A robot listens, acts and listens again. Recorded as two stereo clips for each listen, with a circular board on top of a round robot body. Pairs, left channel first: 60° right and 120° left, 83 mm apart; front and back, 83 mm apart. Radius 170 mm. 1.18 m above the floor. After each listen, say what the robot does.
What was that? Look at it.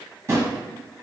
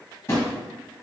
Turn 60° left.
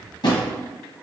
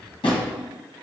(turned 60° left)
Turn 25° right.
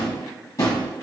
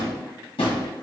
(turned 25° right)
Turn 10° right.
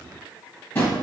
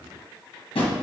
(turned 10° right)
Found it: a drawer, straight ahead.